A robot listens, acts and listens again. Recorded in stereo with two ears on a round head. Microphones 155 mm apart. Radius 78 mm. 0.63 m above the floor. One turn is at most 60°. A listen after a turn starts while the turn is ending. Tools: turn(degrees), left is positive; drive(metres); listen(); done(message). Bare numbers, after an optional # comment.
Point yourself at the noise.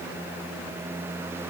listen()
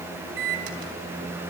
# The microwave: about 65° right or 115° right.
turn(-60)
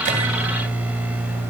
# So it is at 10° right.
turn(-10)
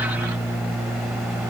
done("Facing the microwave, 2 to 4 m away.")